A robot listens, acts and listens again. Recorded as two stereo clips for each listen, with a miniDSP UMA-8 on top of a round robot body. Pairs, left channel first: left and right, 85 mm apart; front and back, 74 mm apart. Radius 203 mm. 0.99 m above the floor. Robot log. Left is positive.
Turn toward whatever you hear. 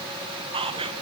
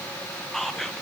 note: The whispering: 85° right.
cmd yaw -85
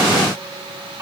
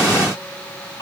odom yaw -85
note: The whispering is now 25° right.
cmd yaw -25
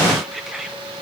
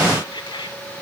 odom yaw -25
end: Facing the whispering.